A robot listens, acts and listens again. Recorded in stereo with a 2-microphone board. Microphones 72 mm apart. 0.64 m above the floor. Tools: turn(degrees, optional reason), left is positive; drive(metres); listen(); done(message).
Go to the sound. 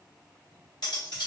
turn(degrees=90)
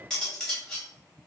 drive(metres=1.0)
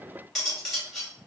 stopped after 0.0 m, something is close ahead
done("Something is in my way. I am facing the cutlery clinking but have not reached it.")